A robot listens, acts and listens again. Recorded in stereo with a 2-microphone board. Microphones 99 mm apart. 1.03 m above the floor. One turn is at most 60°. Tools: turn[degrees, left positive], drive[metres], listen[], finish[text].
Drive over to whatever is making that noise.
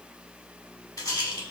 Thought: The rattle: about 40° left or 140° left.
Action: turn[40]
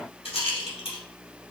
Thought: So it is at 105° left.
Action: turn[60]
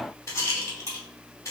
Thought: The rattle is now 30° left.
Action: turn[30]
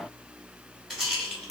Action: drive[1.0]
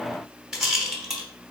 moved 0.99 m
Action: drive[1.0]
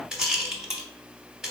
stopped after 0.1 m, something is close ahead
Action: finish[I am next to the rattle.]